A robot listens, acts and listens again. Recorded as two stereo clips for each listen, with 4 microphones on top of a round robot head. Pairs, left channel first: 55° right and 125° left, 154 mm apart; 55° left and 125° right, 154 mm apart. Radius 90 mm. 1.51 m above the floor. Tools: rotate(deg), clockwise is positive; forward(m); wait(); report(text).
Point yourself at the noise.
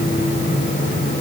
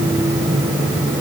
wait()
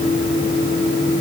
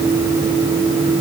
wait()
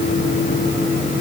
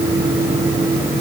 report("I can't make out anything to turn to.")